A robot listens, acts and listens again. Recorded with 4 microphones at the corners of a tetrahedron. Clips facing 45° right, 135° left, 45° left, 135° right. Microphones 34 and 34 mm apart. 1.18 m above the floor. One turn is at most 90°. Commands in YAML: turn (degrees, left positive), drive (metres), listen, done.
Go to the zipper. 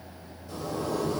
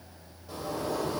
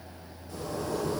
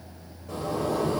turn: -90
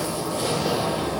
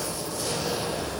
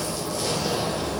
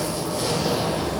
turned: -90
turn: -65
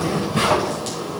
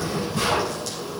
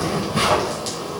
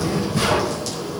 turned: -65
turn: -10
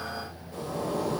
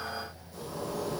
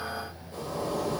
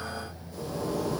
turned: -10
drive: 1.0
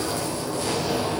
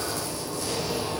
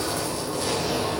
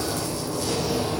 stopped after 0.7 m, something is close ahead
done: "Blocked. The zipper is further on, straight ahead."